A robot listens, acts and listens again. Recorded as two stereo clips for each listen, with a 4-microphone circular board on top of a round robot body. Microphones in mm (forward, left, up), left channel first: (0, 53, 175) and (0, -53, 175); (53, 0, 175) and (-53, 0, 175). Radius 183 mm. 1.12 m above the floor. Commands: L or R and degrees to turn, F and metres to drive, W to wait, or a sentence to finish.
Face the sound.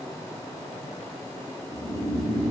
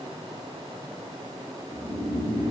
L50
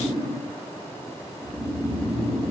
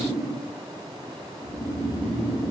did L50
Found it: snoring, straight ahead.